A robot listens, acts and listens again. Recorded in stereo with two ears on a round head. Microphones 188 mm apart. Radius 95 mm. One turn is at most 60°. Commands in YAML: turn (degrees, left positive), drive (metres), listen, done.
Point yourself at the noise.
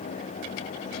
listen: true
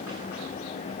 listen: true
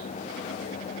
done: "I can't make out anything to turn to."